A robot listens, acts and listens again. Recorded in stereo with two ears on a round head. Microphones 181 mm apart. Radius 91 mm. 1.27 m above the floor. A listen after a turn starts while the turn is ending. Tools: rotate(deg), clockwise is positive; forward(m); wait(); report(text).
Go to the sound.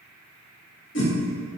rotate(-65)
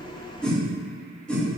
forward(1.0)
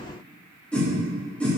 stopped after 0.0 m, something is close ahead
report("Something is in my way. I am facing the whoosh but have not reached it.")